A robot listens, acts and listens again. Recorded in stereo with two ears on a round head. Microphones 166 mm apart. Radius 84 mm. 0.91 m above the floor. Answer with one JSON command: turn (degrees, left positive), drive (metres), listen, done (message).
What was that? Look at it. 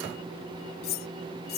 {"turn": 60}
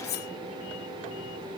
{"turn": 60}
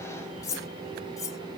{"turn": 20}
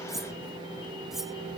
{"done": "Found it: cutlery clinking, straight ahead."}